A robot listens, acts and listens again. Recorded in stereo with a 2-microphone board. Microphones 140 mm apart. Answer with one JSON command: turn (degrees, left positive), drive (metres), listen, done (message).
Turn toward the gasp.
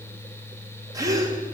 {"turn": -25}
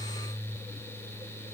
{"listen": true}
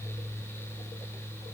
{"done": "I heard a gasp, but can't make it out now. It was about straight ahead or 130° right."}